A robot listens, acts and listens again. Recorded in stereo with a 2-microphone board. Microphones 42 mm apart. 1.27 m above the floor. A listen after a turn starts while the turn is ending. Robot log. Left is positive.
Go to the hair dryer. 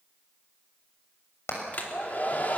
note: The hair dryer: about 40° left or 140° left.
cmd yaw +40
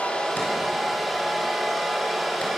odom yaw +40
cmd fwd 1.0
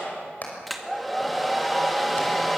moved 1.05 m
cmd fwd 1.0
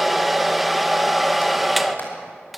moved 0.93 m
cmd fwd 1.0
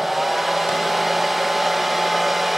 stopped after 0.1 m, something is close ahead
end: Arrived at the hair dryer, straight ahead.